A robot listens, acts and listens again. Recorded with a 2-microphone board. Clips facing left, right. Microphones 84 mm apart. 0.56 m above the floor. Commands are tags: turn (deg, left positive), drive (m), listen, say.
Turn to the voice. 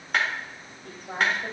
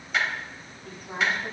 <turn deg="45"/>
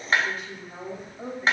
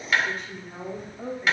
<say>Found it: a woman speaking, straight ahead.</say>